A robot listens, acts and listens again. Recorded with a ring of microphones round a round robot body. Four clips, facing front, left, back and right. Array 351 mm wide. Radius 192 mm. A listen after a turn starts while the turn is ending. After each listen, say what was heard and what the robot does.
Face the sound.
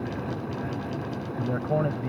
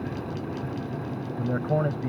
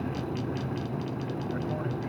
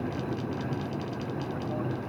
The man speaking: 50° left. Turn 50° left.
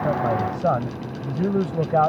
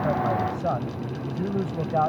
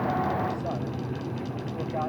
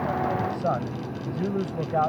Facing the man speaking.